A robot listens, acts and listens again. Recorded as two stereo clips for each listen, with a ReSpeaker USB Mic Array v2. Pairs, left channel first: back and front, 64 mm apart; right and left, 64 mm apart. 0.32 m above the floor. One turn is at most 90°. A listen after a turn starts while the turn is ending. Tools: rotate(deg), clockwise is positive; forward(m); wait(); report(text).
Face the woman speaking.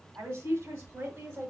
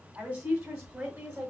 rotate(-55)
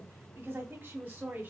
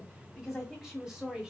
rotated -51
rotate(-20)
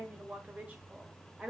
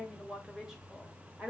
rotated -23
rotate(-55)
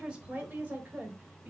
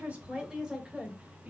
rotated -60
rotate(-40)
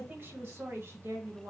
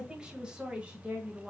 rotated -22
rotate(-25)
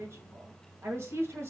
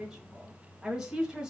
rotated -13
rotate(-15)
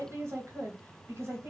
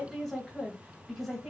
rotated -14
report("Facing the woman speaking.")